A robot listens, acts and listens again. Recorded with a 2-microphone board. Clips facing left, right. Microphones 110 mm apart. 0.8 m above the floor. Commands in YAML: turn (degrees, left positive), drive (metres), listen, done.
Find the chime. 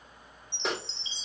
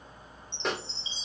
turn: 90
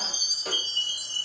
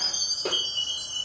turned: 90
done: "Facing the chime, over 4 m away."